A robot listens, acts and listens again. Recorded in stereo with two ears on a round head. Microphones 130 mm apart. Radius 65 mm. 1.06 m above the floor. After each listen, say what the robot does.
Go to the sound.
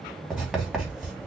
Turn 30° right.
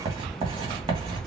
Turn 145° right.
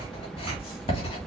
Turn 35° left.
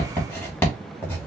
Turn 15° left.
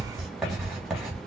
Drive 1.0 m forward.
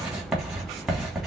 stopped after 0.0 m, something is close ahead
Blocked. The writing is further on, straight ahead.